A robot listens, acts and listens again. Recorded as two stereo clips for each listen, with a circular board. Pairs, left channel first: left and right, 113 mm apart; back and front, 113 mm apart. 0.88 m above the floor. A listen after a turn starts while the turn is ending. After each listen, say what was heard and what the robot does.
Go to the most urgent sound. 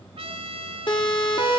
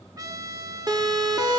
The siren: 50° left. Turn 50° left.
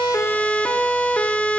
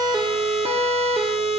The siren is now 10° left. Turn 10° left.
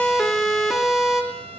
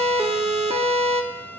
Drive 1.0 m forward.
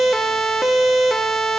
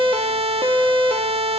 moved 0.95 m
Drive 1.0 m forward.
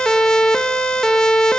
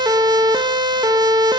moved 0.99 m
The siren is now 10° left. Turn 10° left.
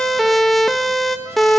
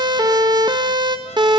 Drive 1.0 m forward.
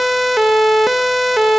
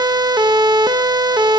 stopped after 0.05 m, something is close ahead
Arrived at the siren, straight ahead.